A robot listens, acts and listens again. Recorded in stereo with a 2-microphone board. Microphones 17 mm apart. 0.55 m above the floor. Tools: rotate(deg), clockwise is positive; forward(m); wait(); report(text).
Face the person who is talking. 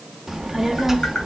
rotate(30)
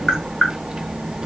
rotate(135)
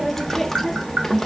rotate(-10)
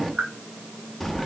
report("Facing the child speaking, under 1 m away.")